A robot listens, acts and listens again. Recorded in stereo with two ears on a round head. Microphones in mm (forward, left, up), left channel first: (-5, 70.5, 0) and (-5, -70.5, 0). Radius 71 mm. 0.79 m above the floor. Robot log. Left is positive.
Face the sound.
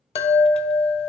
note: The chime: about 35° left or 145° left.
cmd yaw +35
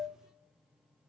end: Found it: a chime, straight ahead, under 1 m away.